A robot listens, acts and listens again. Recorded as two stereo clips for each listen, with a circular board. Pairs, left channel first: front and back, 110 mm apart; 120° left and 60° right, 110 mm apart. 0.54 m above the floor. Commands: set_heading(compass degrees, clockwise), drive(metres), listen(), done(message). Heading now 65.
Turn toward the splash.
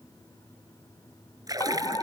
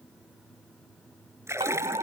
set_heading(190)
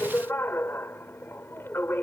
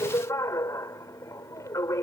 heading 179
set_heading(189)
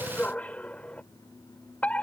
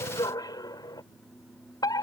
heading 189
done("I heard a splash from this way, but can't make it out now.")